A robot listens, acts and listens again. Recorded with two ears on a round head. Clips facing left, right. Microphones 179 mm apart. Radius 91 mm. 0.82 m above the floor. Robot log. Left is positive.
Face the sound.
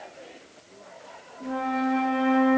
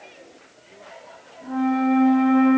note: The flute: about 55° left or 125° left.
cmd yaw +55
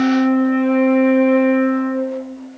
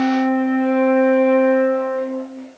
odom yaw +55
note: So it is at 20° left.
cmd yaw +20
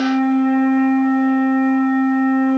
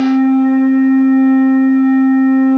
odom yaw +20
end: Found it: a flute, straight ahead, under 1 m away.